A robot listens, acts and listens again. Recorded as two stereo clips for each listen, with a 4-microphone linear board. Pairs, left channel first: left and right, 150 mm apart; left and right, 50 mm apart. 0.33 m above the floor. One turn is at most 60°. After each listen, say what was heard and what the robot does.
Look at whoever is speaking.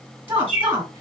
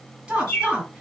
The woman speaking: about 15° right or 165° right. Turn 15° right.
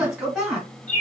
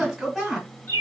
Facing the woman speaking.